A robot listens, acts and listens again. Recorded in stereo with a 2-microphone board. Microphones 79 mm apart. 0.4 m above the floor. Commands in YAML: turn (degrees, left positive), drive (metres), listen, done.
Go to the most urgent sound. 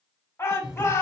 turn: 35
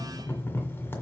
listen: true
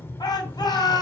turn: 105
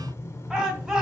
turn: -10
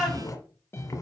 drive: 1.0
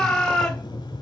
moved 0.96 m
turn: 10
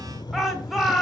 drive: 1.0
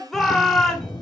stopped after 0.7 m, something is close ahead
done: "Arrived at the shout, straight ahead."